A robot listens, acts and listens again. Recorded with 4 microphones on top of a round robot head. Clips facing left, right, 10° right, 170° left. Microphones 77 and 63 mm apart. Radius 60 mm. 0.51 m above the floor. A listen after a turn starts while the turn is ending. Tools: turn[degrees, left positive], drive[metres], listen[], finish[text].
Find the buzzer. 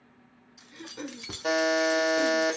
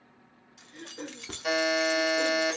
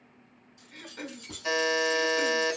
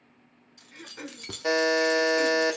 Thought: The buzzer: 140° left.
Action: turn[140]
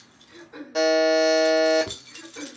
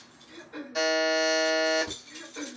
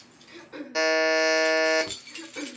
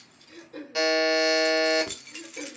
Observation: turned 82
Thought: The buzzer is now 55° left.
Action: turn[55]
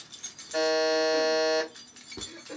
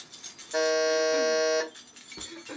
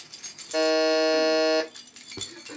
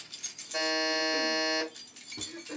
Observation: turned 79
Thought: The buzzer is now 20° right.
Action: turn[-20]
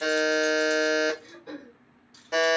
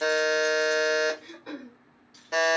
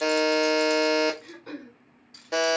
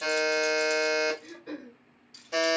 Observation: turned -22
Action: finish[Facing the buzzer, 1 to 2 m away.]